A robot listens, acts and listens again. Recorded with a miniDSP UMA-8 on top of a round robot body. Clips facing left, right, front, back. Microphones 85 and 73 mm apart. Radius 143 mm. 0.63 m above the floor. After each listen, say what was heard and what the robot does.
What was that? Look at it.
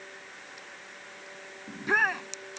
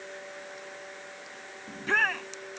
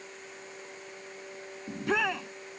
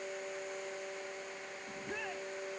The shout: 10° left. Turn 10° left.
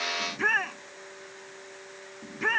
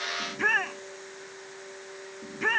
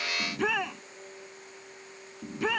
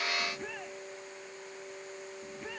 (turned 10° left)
Facing the shout.